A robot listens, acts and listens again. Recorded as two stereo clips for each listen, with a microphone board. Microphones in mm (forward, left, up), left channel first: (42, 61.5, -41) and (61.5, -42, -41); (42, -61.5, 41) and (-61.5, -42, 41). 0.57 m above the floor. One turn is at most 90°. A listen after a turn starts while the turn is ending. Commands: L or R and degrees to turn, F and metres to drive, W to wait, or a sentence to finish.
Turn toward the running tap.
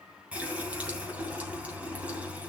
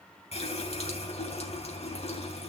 Facing the running tap.